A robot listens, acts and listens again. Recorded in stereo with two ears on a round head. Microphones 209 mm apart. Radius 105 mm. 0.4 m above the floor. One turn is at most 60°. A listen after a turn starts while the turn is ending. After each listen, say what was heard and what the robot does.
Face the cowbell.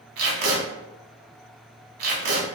Keep listening.
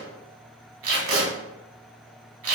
Keep listening.
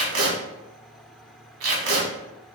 I can't make out a cowbell to turn to.